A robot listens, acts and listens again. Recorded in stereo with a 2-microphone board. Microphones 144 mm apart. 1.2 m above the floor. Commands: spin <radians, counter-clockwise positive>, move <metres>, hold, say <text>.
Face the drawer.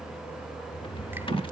spin 0.61
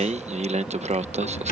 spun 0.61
spin 1.83
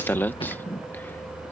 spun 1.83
hold
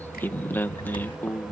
hold
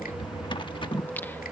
spin 0.61
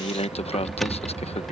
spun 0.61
say Facing the drawer.